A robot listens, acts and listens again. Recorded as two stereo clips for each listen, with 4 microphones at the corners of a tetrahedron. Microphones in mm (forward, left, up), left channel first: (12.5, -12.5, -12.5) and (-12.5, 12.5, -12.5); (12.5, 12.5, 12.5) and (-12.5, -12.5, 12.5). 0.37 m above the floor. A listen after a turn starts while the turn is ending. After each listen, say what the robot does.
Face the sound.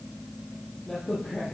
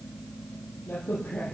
Turn 35° left.
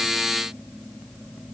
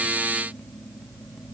I heard a crack from this way, but can't make it out now.